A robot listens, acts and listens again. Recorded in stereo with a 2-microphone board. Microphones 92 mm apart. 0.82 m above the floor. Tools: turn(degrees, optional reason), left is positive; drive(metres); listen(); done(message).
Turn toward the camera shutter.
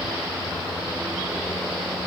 listen()
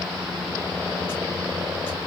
listen()
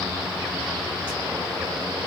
done("I can't make out a camera shutter to turn to.")